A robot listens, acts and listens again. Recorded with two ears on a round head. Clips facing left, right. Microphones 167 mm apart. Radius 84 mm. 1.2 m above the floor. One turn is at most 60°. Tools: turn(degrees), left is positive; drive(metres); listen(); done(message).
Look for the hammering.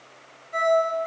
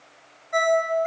listen()
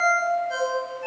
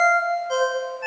listen()
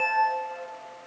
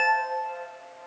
done("I can't make out hammering, only a ringtone.")